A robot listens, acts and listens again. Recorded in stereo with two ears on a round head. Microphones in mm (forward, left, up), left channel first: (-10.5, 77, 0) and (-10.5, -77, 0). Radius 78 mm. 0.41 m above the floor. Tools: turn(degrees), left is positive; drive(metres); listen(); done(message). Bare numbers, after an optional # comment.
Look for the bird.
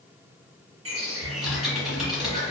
# The bird: about 40° right or 140° right.
turn(-40)
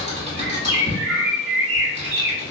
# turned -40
# So it is at 105° right.
turn(-105)
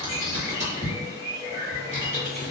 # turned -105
done("Facing the bird, 1 to 2 m away.")